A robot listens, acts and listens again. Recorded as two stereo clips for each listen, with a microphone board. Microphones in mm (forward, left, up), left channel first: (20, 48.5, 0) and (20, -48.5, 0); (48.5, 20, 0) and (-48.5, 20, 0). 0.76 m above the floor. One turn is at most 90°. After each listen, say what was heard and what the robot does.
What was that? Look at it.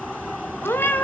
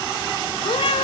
The cat meowing: 20° left. Turn 20° left.
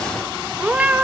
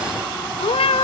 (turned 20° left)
The cat meowing is now 15° right. Turn 15° right.
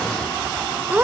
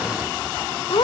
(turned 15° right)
The cat meowing is now 20° right. Turn 20° right.
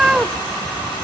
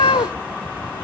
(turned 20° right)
The cat meowing is now 10° right. Turn 10° right.
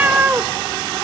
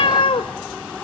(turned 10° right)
The cat meowing is now 25° right. Turn 25° right.
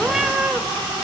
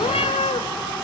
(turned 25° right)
The cat meowing is now 10° right. Turn 10° right.
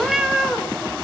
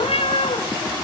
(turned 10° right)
Facing the cat meowing.